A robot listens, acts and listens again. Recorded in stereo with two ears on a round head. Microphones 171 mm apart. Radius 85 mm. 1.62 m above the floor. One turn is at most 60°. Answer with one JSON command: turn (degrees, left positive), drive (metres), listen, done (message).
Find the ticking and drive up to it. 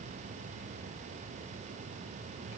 {"listen": true}
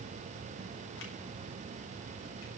{"listen": true}
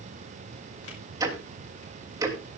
{"turn": -20}
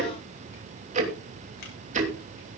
{"turn": -60}
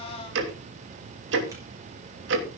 {"turn": -60}
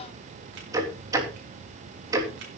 {"turn": -20}
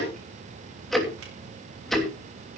{"drive": 1.0}
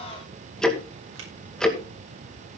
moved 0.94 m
{"drive": 1.0}
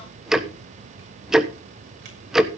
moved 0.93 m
{"drive": 1.0}
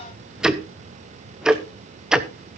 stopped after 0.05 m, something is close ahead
{"done": "Arrived at the ticking, straight ahead."}